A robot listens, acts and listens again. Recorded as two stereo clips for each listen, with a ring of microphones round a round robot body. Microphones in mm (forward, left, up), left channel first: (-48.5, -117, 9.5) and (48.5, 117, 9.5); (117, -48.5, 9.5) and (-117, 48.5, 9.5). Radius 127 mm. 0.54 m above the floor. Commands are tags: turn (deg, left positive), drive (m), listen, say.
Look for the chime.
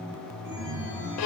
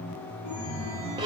<turn deg="20"/>
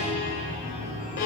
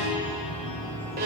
<say>Facing the chime.</say>